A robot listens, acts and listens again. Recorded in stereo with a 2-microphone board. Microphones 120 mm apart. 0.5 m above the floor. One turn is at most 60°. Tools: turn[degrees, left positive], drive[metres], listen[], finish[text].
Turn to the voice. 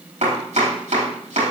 Action: listen[]
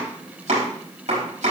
Action: listen[]
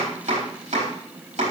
Action: finish[I can't make out anyone speaking, only chopping.]